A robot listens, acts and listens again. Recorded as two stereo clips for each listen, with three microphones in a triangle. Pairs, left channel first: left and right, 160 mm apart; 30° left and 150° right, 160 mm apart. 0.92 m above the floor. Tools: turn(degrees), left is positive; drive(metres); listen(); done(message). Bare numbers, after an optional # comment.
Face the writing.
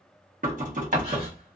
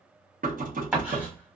# The writing: 70° right.
turn(-70)
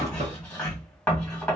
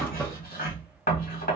# The writing is now 10° left.
turn(10)
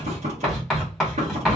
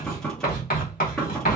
done("Found it: writing, straight ahead.")